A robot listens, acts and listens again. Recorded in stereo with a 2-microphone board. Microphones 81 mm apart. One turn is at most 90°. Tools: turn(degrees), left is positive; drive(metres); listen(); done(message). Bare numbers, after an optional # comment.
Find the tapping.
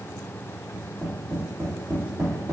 # The tapping: about 50° right or 130° right.
turn(-50)
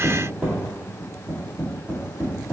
# So it is at 10° right.
turn(-10)
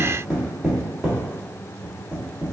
done("Facing the tapping.")